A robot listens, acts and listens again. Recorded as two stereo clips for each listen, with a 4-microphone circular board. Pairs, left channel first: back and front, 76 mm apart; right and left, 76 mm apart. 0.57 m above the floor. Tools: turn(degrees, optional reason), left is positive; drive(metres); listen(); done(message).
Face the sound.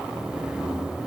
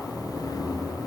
listen()
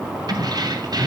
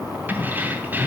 turn(degrees=25, reason="The keys jangling: 25° left.")
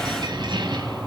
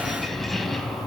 done("Facing the keys jangling, 2 to 4 m away.")